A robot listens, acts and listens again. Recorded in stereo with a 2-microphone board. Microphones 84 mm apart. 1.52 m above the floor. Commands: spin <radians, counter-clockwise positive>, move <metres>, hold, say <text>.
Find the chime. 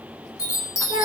spin 0.70
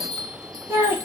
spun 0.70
say Facing the chime, under 1 m away.